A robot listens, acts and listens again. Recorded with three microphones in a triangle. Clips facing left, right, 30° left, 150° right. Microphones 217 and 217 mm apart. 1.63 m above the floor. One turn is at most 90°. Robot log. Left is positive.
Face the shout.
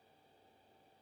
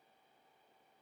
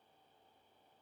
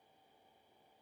cmd idle
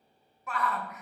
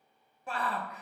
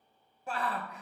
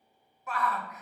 note: The shout: 30° right.
cmd yaw -30
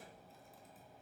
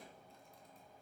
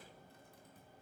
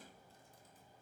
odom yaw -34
cmd idle
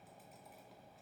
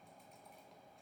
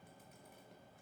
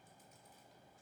cmd idle
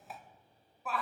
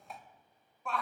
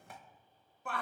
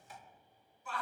end: Found it: a shout, straight ahead, 1 to 2 m away.